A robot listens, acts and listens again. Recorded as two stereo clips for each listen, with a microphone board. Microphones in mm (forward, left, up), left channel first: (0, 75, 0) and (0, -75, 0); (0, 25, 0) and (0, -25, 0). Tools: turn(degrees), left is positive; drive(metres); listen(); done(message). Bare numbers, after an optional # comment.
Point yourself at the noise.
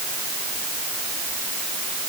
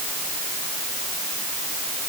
listen()
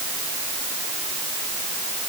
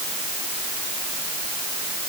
listen()
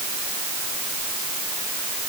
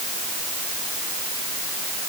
done("I can't make out anything.")